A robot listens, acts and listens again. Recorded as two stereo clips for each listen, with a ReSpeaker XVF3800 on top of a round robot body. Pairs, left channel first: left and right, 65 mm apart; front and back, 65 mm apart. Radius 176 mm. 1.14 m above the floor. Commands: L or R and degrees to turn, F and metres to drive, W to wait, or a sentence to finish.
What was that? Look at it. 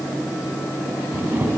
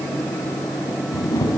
R30
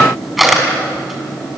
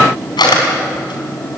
Found it: a camera shutter, straight ahead, over 4 m away.